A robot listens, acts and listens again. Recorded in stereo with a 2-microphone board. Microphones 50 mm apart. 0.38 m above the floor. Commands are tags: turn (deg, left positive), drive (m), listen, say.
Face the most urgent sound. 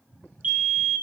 <turn deg="-35"/>
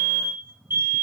<turn deg="-105"/>
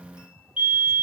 <turn deg="-35"/>
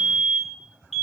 <say>Found it: a fire alarm, straight ahead.</say>